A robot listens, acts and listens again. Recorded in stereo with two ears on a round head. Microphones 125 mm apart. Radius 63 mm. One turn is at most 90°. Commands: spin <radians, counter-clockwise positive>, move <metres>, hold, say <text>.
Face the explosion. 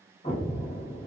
spin 0.70
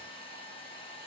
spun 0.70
hold
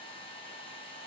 say I heard an explosion, but can't make it out now. It was about straight ahead or 100° left.